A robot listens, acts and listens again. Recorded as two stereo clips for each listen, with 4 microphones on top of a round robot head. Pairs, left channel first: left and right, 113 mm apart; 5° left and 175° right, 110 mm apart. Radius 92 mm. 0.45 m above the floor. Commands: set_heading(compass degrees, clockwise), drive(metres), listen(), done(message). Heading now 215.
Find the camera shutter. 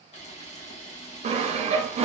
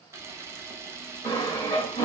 set_heading(95)
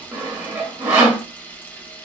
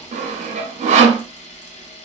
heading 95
set_heading(80)
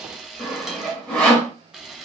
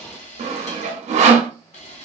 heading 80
done("Found it: a camera shutter, straight ahead.")